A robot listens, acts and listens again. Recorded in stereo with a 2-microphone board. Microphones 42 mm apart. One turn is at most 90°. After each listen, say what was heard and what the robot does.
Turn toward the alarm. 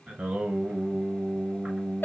Keep listening.
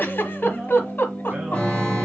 The alarm: about 35° left or 145° left. Turn 35° left.
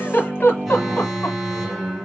Facing the alarm.